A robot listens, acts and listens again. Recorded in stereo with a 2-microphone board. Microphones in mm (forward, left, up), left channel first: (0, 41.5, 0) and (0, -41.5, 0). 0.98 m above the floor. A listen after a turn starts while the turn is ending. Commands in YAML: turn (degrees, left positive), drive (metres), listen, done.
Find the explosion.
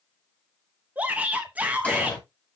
turn: 15
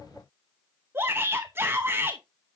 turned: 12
listen: true
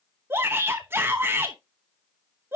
done: "I heard an explosion, but can't make it out now. It was about 5° left or 150° left."